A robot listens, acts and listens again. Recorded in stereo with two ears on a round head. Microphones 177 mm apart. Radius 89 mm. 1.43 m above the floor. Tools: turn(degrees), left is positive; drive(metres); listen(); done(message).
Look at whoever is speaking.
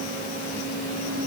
listen()
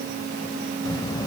turn(degrees=20)
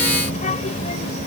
turn(degrees=35)
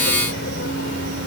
turn(degrees=115)
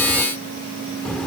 done("Facing the child speaking.")